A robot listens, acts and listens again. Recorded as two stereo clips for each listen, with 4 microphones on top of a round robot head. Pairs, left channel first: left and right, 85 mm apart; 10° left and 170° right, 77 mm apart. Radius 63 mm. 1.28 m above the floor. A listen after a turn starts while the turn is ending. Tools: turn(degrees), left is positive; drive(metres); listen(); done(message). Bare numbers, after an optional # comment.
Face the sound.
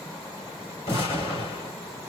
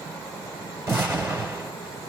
# The explosion: 130° left.
turn(130)
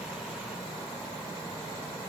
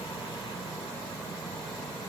done("Facing where the explosion came from. I can't hear it now.")